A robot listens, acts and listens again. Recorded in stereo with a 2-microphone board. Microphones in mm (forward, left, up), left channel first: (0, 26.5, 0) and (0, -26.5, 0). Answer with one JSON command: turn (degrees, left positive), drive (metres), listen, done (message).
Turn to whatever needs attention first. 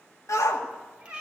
{"turn": 90}
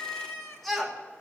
{"done": "Found it: a shout, straight ahead."}